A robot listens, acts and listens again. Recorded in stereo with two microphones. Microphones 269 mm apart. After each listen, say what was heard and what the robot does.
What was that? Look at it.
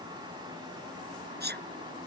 The sneeze: about 40° right or 140° right. Turn 40° right.
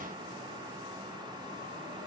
Keep listening.
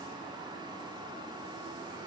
I heard a sneeze, but can't make it out now. It was about straight ahead or 100° right.